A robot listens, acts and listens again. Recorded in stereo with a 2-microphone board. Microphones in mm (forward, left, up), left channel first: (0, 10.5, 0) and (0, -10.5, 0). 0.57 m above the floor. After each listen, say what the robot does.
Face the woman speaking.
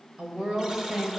Turn 70° right.
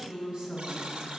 Turn 45° right.
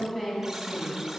Facing the woman speaking, over 4 m away.